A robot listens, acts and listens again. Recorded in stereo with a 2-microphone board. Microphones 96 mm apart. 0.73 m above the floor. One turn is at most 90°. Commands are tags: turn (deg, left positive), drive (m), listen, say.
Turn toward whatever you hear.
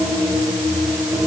<listen/>
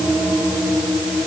<listen/>
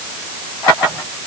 <say>I can't make out anything.</say>